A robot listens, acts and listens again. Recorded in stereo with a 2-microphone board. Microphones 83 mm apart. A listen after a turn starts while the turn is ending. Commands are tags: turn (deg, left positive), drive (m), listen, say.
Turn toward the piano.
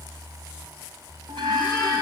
<listen/>
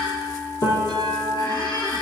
<turn deg="45"/>
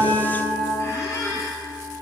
<listen/>
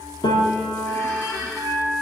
<turn deg="85"/>
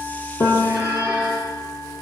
<turn deg="35"/>
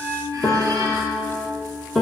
<turn deg="10"/>
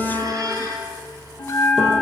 <listen/>
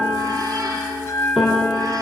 <say>Found it: a piano, straight ahead, 2 to 4 m away.</say>